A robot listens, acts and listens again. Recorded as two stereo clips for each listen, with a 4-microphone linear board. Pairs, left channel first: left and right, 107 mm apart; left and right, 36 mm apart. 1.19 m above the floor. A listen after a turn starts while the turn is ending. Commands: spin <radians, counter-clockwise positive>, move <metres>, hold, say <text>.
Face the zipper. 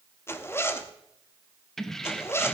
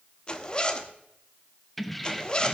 spin 0.44
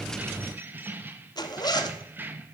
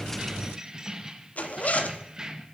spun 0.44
spin 2.18
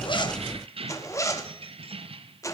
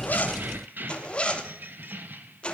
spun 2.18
spin 0.70
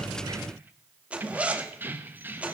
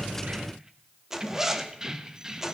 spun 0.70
spin -0.26
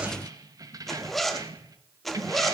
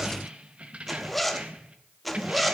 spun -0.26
say Facing the zipper, 1 to 2 m away.